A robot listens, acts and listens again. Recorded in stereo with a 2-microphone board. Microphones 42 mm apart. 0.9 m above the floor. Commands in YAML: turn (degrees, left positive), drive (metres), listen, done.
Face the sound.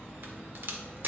turn: -55
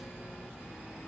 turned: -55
listen: true
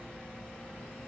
done: "I heard a crack, but can't make it out now. It was about straight ahead or 70° right."